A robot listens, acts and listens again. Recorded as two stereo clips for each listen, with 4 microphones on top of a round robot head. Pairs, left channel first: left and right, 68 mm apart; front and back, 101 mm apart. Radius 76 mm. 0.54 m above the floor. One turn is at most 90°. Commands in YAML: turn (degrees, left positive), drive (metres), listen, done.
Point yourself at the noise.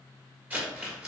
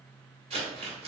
turn: -90
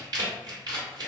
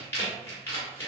turn: -70
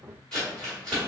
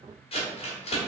turn: 10
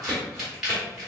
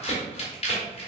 done: "Facing the crumpling, 1 to 2 m away."